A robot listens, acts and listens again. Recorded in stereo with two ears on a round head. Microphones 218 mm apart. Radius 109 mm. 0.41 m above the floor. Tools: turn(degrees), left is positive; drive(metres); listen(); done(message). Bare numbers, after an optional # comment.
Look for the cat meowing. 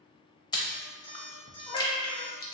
# The cat meowing: about 25° left or 155° left.
turn(25)
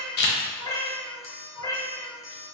# The cat meowing: about 20° left or 160° left.
turn(20)
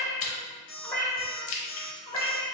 turn(30)
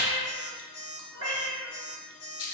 # So it is at 15° right.
turn(-15)
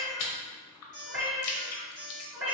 # The cat meowing is now 10° right.
turn(-10)
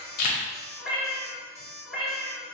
done("Facing the cat meowing.")